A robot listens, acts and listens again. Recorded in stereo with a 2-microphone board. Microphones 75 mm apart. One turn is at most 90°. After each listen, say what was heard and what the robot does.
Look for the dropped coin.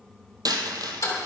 The dropped coin: about 65° right or 115° right. Turn 65° right.
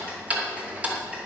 Keep listening.
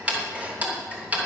I heard a dropped coin, but can't make it out now. It was about straight ahead or 50° right.